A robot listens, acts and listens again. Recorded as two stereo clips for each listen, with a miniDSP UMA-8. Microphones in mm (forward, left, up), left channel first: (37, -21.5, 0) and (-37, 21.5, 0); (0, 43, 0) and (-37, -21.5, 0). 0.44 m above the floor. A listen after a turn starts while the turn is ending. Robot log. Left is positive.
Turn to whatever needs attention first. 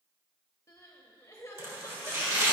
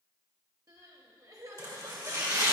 note: The crying: 85° right.
cmd yaw -85
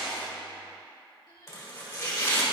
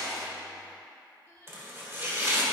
end: Facing the crying.